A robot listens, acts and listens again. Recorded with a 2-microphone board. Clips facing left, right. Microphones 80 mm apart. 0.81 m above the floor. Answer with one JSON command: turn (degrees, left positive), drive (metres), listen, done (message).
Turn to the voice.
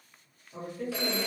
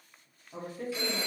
{"turn": -35}
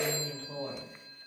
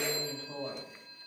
{"done": "Found it: a woman speaking, straight ahead, 1 to 2 m away."}